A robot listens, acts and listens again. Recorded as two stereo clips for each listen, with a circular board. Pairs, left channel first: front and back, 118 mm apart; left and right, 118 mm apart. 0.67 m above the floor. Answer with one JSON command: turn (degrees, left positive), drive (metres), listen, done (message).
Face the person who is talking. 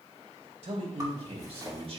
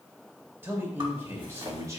{"turn": -150}
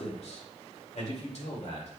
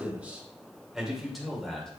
{"done": "Facing the man speaking, 2 to 4 m away."}